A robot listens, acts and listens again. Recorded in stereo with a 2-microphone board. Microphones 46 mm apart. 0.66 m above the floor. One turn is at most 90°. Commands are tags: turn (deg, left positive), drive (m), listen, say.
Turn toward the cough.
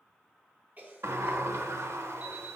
<turn deg="-35"/>
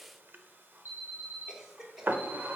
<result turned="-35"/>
<turn deg="-10"/>
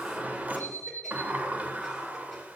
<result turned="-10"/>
<listen/>
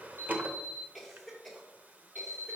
<say>Facing the cough, 2 to 4 m away.</say>